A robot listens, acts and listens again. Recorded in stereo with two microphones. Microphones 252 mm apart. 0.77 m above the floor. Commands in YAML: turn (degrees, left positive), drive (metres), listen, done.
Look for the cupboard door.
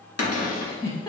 turn: 75
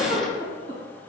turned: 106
listen: true
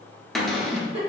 done: "Found it: a cupboard door, straight ahead, under 1 m away."